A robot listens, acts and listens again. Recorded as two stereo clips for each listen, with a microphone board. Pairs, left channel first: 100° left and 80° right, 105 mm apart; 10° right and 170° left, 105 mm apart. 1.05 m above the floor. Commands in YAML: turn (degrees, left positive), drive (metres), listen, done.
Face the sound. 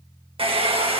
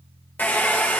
turn: -80
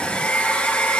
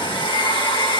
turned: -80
turn: 25
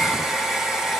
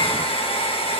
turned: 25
done: "Found it: a hair dryer, straight ahead."